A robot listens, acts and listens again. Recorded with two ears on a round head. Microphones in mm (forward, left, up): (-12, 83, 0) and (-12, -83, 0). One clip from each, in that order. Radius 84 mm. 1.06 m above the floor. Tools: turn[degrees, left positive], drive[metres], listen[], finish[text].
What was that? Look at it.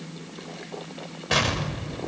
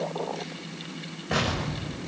Action: turn[90]
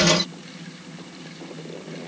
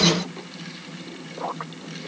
Action: finish[I heard an explosion from this way, but can't make it out now.]